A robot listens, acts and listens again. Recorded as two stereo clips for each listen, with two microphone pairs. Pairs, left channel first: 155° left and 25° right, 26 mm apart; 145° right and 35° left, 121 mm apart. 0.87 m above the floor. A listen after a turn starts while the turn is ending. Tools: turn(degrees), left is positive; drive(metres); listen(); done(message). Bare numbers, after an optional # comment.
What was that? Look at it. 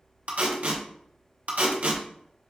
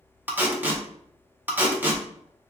# The tape being pulled: 35° right.
turn(-35)
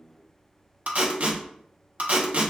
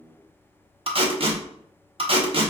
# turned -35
done("Facing the tape being pulled.")